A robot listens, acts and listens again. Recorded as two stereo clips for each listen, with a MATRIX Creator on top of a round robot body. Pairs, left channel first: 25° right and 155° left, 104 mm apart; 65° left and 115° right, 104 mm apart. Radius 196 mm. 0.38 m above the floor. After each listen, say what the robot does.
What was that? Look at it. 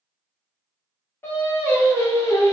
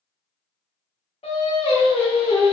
Turn 45° left.
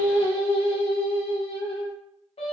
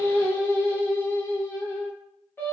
Found it: singing, straight ahead.